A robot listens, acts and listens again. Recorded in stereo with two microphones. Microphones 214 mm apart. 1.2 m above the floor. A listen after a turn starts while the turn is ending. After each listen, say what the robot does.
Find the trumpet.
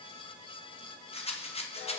Keep listening.
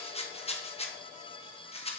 Keep listening.
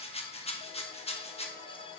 I can't make out a trumpet, only a rattle.